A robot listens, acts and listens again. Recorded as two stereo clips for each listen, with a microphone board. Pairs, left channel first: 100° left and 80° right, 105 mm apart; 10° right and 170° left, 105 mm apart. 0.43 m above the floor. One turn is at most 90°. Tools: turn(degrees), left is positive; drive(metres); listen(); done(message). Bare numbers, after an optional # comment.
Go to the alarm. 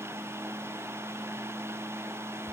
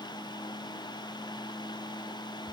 listen()
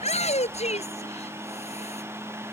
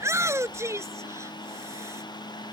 listen()
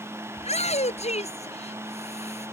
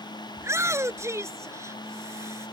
done("I can't make out an alarm to turn to.")